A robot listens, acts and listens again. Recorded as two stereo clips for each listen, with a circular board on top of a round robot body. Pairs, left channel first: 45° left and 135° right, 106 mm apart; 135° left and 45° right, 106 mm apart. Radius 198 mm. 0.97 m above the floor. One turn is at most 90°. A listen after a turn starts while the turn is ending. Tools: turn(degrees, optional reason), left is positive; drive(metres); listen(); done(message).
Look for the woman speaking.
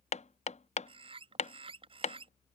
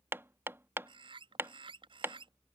listen()
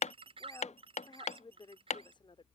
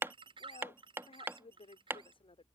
turn(degrees=90, reason="The woman speaking: 95° left.")
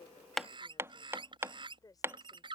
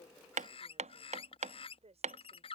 turn(degrees=-15, reason="The woman speaking is now 15° right.")
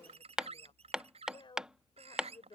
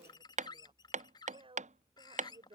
done("Found it: a woman speaking, straight ahead.")